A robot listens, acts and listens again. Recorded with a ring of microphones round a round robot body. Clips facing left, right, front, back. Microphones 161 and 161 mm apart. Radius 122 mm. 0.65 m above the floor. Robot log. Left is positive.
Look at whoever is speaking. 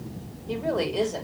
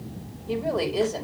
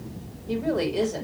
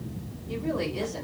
end: Found it: a woman speaking, straight ahead.